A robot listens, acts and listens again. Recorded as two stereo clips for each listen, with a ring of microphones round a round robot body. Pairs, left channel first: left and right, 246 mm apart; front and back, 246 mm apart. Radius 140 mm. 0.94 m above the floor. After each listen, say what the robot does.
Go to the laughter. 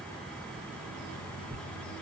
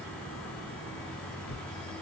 Keep listening.
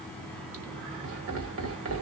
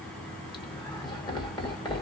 Turn 70° right.
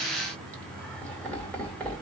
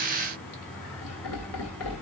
Drive 1.0 m forward.
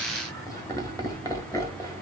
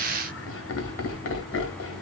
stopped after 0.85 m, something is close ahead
Turn 15° left.
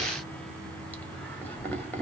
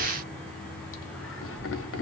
Turn 10° left.
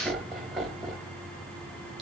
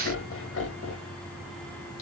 I am next to the laughter.